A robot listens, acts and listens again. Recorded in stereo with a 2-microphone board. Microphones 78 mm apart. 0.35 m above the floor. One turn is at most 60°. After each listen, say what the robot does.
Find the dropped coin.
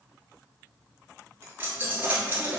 Turn 25° right.
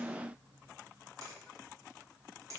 Keep listening.
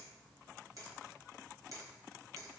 I heard a dropped coin, but can't make it out now. It was about straight ahead or 130° right.